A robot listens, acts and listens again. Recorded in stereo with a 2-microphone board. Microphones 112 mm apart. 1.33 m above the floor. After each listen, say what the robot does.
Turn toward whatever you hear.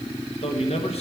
Turn 70° left.
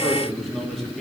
Keep listening.
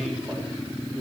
Found it: a man speaking, straight ahead.